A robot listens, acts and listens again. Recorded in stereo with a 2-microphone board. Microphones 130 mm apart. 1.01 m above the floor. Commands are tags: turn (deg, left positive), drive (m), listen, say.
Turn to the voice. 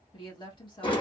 <turn deg="35"/>
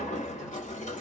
<listen/>
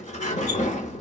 <listen/>
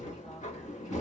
<say>I heard a woman speaking, but can't make it out now. It was about straight ahead or 110° left.</say>